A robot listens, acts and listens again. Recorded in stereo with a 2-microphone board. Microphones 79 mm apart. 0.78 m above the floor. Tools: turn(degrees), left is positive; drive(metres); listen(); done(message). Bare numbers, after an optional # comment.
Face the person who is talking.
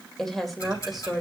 turn(-30)
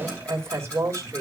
# So it is at 140° right.
turn(-140)
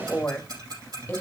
# The woman speaking is now 25° left.
turn(25)
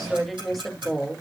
done("Facing the woman speaking.")